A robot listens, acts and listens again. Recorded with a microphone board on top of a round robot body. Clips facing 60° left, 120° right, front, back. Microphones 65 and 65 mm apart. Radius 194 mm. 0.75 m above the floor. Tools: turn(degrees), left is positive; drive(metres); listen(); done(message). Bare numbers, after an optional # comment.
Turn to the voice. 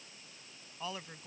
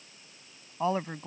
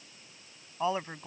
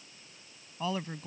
# The woman speaking: 65° right.
turn(-65)
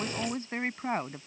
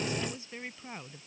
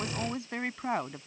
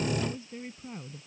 # The woman speaking is now 15° left.
turn(15)
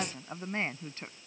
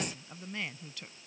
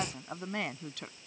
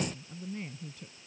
done("Found it: a woman speaking, straight ahead.")